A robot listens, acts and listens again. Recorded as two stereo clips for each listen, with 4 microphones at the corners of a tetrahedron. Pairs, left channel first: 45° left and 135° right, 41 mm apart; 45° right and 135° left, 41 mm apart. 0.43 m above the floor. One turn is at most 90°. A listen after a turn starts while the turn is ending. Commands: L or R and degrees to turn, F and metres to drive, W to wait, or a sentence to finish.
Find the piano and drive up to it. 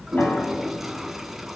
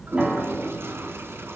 L80
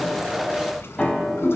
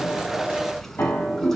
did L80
R25
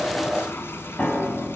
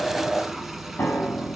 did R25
R10
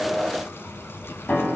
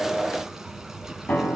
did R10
F1.0
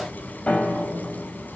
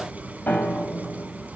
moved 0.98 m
R10
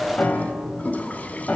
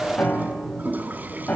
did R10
F1.0
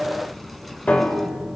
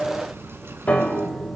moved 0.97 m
F1.0
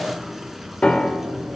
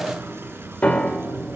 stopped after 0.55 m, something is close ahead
I am next to the piano.